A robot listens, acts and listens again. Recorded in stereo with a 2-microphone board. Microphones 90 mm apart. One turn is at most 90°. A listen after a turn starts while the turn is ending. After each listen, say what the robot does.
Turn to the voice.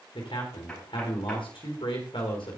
Turn 90° left.
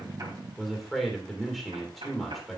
Found it: a man speaking, straight ahead.